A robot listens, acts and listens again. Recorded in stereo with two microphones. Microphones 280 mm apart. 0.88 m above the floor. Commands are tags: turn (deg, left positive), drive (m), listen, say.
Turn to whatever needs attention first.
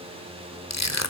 <listen/>
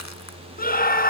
<turn deg="30"/>
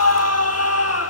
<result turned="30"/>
<turn deg="115"/>
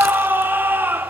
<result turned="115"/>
<turn deg="-10"/>
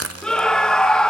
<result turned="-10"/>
<say>Found it: a scream, straight ahead, 1 to 2 m away.</say>